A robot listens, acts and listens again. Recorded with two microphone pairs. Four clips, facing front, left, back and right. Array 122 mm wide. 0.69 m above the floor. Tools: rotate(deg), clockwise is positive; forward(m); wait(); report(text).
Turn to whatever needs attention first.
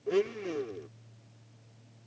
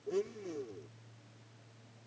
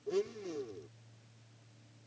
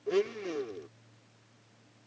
wait()
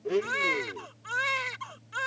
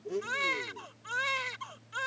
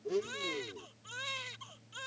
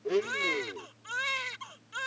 rotate(-10)
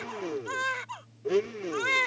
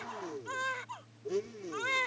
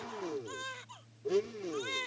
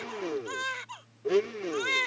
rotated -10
report("Found it: a baby crying, straight ahead.")